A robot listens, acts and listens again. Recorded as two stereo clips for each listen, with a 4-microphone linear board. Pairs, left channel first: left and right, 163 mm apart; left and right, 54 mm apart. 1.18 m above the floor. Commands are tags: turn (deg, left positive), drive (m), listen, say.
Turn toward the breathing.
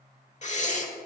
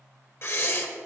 <turn deg="45"/>
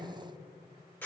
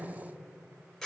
<turn deg="10"/>
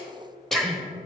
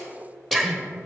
<say>Found it: breathing, straight ahead.</say>